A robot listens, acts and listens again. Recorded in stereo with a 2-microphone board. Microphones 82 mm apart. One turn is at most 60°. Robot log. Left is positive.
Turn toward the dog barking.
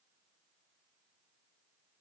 cmd idle
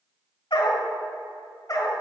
note: The dog barking: about 40° left or 140° left.
cmd yaw +40
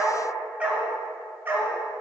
note: So it is at 25° right.
cmd yaw -25
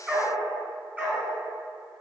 note: The dog barking is now 20° right.
cmd yaw -20
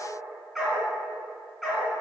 end: Found it: a dog barking, straight ahead.